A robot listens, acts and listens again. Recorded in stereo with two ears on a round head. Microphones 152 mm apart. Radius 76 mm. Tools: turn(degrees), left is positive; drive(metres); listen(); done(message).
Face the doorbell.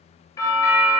turn(degrees=20)
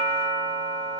done("Found it: a doorbell, straight ahead, 2 to 4 m away.")